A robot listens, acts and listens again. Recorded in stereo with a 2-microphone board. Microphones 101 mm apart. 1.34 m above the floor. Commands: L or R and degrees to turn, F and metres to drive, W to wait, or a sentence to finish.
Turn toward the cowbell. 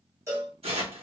R25
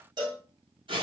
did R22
R130
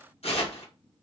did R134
W
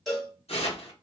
Facing the cowbell.